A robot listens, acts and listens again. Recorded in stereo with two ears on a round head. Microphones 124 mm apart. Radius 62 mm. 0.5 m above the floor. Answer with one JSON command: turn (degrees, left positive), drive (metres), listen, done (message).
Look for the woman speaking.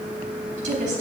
{"turn": -60}
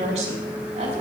{"turn": -45}
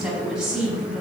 {"done": "Found it: a woman speaking, straight ahead, over 4 m away."}